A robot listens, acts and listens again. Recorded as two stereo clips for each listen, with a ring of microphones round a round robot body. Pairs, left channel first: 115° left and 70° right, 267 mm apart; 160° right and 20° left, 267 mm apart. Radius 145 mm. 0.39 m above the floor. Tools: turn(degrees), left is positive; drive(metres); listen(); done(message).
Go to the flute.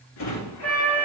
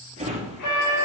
turn(degrees=-165)
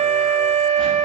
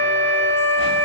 drive(metres=1.0)
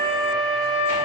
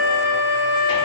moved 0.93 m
drive(metres=1.0)
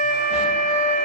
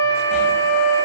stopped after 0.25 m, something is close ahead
turn(degrees=-10)
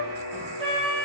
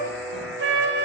done("Arrived at the flute, straight ahead.")